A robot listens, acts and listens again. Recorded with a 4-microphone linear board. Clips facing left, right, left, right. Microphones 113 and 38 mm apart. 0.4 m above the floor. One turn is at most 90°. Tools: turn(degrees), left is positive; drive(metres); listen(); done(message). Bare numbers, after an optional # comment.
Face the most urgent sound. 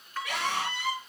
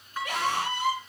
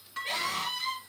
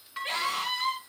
# The scream: about 35° right or 145° right.
turn(-35)
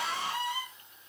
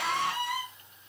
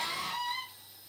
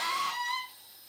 # So it is at 110° right.
turn(-90)
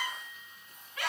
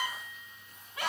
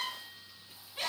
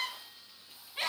# The scream is now 30° right.
turn(-30)
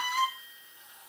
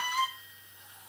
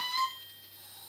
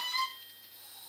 # The scream is now 15° right.
turn(-15)
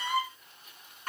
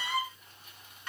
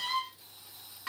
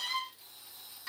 done("Found it: a scream, straight ahead.")